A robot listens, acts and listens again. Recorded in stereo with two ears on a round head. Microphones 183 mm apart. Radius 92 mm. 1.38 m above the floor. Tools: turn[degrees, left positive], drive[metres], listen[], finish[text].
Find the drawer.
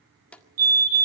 Action: turn[30]
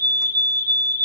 Action: listen[]
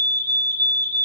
Action: listen[]
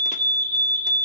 Action: finish[I heard a drawer, but can't make it out now. It was about 25° right or 145° left.]